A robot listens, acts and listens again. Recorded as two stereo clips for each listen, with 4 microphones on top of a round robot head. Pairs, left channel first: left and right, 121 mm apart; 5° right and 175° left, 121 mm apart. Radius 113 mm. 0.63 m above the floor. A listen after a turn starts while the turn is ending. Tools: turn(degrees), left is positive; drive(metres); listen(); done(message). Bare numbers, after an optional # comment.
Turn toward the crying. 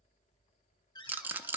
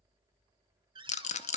listen()
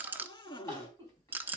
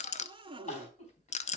# The crying: 20° left.
turn(20)
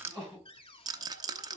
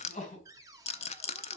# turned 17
done("Facing the crying, 2 to 4 m away.")